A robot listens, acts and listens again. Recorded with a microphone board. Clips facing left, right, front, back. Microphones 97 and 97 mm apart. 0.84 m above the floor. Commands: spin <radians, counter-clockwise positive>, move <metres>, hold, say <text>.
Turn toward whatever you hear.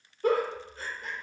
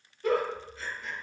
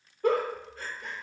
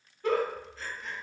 spin 0.70
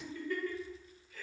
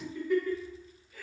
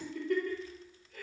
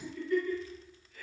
spin -0.26
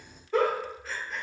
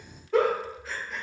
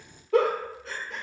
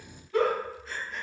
say Facing the giggle, under 1 m away.